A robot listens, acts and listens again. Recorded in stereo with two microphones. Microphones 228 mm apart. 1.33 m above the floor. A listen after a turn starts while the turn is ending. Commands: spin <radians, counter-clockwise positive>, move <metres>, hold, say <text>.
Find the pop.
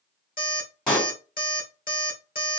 spin 0.52
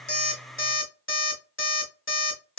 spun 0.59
hold
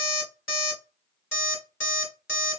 say I heard a pop, but can't make it out now. It was about 30° right or 145° left.